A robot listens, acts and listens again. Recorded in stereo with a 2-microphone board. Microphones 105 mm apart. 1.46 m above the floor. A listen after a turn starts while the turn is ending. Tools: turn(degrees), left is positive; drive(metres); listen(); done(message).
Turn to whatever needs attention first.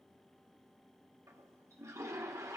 listen()
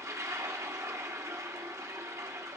listen()
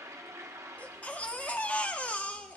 turn(degrees=30)
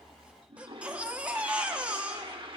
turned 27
turn(degrees=-15)
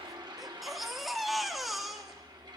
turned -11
done("Found it: a baby crying, straight ahead, under 1 m away.")